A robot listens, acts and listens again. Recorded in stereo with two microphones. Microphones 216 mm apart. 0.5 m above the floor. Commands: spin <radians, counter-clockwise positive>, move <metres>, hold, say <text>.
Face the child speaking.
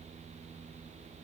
hold
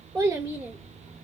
spin -0.52
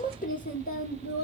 spin 0.87
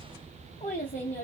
spin 0.70
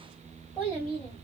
spin 0.17
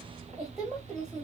say Found it: a child speaking, straight ahead, 2 to 4 m away.